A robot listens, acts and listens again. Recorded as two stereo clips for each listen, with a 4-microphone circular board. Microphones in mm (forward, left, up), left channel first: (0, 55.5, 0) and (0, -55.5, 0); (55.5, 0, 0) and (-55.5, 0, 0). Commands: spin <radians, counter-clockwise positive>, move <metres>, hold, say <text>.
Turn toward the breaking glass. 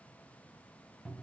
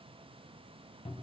hold
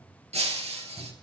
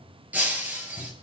spin -1.83
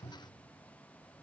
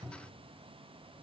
say I heard breaking glass from this way, but can't make it out now.